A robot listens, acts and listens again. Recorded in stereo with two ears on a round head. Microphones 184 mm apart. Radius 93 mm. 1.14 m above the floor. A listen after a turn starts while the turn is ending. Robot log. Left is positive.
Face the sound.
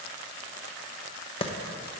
note: The clap: about 30° left or 150° left.
cmd yaw +30
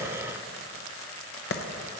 note: So it is at 125° left.
cmd yaw +125
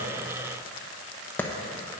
note: The clap is now 10° left.
cmd yaw +10
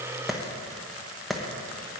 end: Found it: a clap, straight ahead, under 1 m away.